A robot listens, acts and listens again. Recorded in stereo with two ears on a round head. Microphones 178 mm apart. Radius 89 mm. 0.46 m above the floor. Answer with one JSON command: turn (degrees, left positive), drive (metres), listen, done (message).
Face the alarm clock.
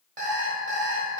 {"turn": -40}
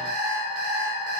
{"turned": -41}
{"turn": -95}
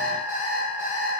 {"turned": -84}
{"turn": -15}
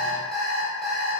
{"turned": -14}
{"done": "Facing the alarm clock, under 1 m away."}